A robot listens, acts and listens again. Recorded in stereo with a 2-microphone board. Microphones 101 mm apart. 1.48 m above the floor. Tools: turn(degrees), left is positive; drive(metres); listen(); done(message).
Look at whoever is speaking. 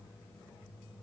listen()
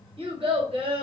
turn(degrees=-65)
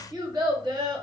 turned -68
turn(degrees=-45)
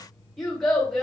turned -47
done("Found it: a child speaking, straight ahead.")